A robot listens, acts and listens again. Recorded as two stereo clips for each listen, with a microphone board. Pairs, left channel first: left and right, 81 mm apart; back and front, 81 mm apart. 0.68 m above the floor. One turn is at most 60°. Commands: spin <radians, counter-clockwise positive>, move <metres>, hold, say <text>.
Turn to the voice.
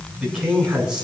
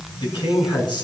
spin -1.05
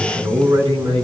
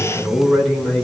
spin -1.05
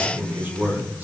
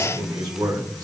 spin -0.44
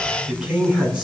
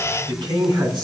spin -0.26
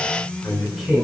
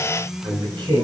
say Found it: a man speaking, straight ahead, over 4 m away.